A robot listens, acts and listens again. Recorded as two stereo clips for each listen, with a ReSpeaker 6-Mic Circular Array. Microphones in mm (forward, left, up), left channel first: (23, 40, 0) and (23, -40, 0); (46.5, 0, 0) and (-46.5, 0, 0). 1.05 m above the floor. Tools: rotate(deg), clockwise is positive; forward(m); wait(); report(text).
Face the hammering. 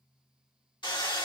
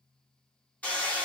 rotate(-75)
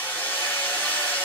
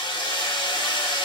rotate(-25)
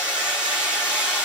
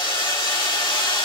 rotate(15)
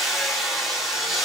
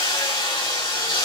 report("Facing the hammering, 2 to 4 m away.")